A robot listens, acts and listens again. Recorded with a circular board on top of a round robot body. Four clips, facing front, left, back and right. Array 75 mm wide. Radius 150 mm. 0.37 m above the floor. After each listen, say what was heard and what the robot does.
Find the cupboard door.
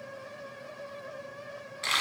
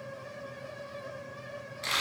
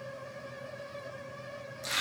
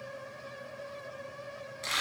Keep listening.
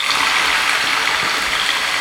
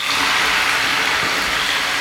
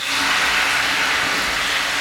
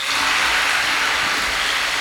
Keep listening.
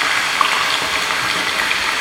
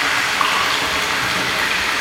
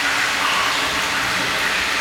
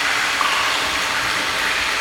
I can't make out a cupboard door, only frying.